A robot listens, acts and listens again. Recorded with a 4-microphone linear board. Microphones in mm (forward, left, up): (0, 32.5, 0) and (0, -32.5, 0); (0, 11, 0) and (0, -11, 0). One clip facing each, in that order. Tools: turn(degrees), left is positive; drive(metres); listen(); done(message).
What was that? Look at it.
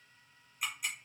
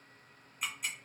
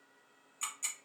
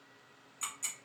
turn(degrees=30)
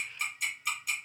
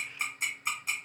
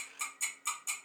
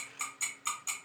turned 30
turn(degrees=-30)
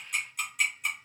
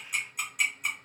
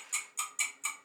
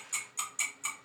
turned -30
done("Found it: ticking, straight ahead, 1 to 2 m away.")